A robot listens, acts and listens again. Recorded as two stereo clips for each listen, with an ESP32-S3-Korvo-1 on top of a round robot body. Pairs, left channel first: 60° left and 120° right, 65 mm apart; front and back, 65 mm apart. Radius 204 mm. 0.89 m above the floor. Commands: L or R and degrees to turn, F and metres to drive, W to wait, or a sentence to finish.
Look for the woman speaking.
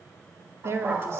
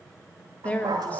R70
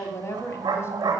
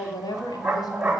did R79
L10
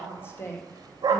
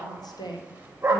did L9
Found it: a woman speaking, straight ahead, 2 to 4 m away.